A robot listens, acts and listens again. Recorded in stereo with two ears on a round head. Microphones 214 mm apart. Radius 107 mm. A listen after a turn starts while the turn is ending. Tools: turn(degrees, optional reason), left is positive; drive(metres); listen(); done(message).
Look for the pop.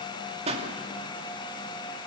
turn(degrees=-25, reason="The pop: about 25° right or 155° right.")
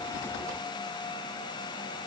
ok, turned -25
listen()
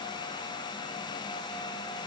done("I heard a pop, but can't make it out now. It was about straight ahead or 130° right.")